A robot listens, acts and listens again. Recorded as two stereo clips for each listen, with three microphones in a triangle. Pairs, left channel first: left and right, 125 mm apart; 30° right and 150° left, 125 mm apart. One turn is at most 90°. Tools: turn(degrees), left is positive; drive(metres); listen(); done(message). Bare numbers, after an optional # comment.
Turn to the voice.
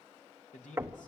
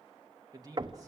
# The man speaking: 90° left.
turn(90)
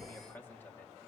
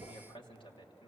# The man speaking is now 15° left.
turn(15)
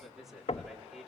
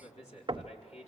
done("Found it: a man speaking, straight ahead.")